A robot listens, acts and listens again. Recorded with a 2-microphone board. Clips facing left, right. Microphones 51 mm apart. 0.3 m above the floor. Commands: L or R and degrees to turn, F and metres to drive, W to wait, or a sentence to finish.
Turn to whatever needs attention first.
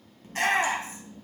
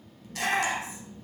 L35
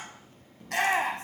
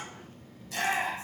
L100
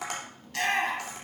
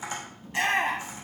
R25
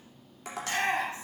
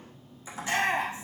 R25
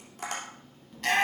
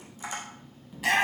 R10
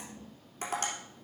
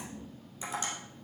W
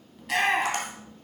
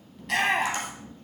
Facing the shout.